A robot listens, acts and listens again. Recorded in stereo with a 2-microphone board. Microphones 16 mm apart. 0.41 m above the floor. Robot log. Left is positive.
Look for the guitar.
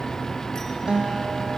cmd yaw -90
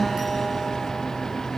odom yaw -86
note: So it is at 10° right.
cmd yaw -10
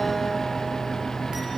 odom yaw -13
cmd idle
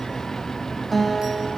end: Facing the guitar.